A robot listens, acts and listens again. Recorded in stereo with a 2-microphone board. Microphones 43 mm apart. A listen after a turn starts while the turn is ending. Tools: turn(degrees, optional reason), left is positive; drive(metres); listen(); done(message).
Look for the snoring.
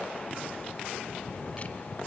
turn(degrees=-30)
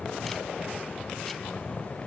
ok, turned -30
turn(degrees=20, reason="So it is at 20° left.")
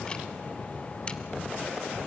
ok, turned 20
done("Found it: snoring, straight ahead, 1 to 2 m away.")